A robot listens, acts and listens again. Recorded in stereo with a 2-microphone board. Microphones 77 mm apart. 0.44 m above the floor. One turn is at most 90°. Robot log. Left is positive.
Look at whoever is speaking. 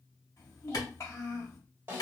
note: The child speaking: about 40° left or 140° left.
cmd yaw +40
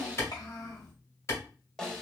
note: So it is at 90° left.
cmd yaw +90
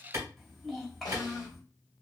end: Facing the child speaking, 1 to 2 m away.